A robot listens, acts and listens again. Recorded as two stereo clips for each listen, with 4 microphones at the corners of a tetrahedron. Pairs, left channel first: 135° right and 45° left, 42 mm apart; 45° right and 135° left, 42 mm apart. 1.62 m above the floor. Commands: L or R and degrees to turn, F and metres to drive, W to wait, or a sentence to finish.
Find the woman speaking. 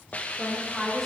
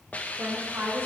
L130
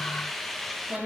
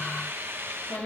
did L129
R10
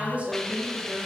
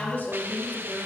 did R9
R10
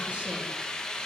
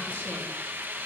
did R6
W
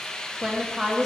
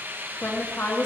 R30
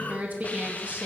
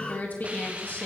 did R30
Facing the woman speaking.